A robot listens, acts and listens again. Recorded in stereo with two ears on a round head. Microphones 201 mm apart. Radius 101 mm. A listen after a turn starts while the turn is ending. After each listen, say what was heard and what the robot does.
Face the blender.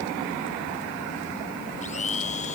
The blender: about 30° left or 150° left. Turn 30° left.
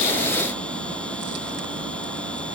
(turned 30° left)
Keep listening.
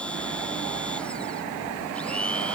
Found it: a blender, straight ahead.